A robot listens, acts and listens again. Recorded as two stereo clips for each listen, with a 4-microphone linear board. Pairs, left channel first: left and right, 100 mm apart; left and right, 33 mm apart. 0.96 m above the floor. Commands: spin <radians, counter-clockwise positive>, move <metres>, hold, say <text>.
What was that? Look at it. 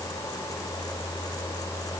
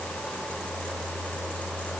hold
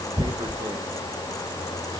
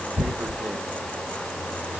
spin -0.79
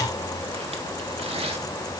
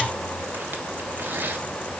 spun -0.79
spin -1.57
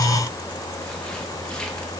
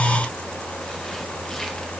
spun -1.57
hold
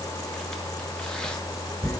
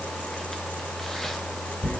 spin 0.17
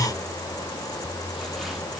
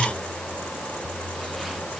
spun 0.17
hold
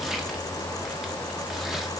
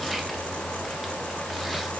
hold
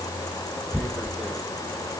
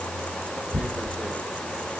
say Facing the tearing paper.